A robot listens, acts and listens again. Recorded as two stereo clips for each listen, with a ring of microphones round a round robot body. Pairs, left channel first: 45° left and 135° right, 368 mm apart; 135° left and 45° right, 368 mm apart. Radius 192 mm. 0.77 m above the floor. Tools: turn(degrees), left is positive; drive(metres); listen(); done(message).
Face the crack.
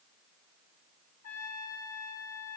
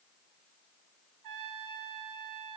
listen()
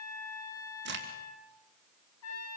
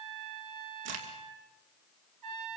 turn(degrees=-75)
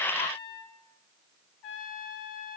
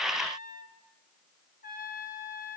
done("Facing where the crack came from. I can't hear it now.")